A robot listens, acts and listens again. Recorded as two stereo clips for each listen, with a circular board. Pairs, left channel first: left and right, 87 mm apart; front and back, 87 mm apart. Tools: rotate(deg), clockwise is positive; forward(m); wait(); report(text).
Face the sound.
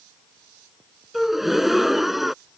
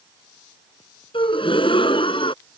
report("Facing the gasp.")